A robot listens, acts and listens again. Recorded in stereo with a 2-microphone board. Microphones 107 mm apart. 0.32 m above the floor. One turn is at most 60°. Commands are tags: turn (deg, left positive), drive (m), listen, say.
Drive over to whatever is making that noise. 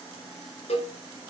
<turn deg="60"/>
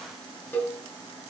<turn deg="15"/>
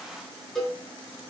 <drive m="1.0"/>
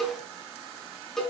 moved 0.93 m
<drive m="1.0"/>
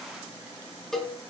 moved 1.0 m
<drive m="1.0"/>
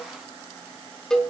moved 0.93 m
<drive m="1.0"/>
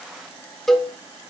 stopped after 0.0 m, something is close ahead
<say>Arrived at the cowbell, straight ahead.</say>